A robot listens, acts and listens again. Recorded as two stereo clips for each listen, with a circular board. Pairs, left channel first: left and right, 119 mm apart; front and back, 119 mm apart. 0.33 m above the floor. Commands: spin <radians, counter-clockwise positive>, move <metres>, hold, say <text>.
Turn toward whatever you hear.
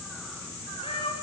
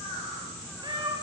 spin 2.27
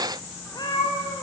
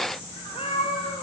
spin 0.61
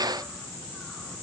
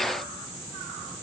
hold
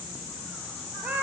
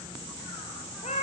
spin -0.17
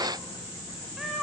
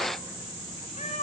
say Found it: a cat meowing, straight ahead.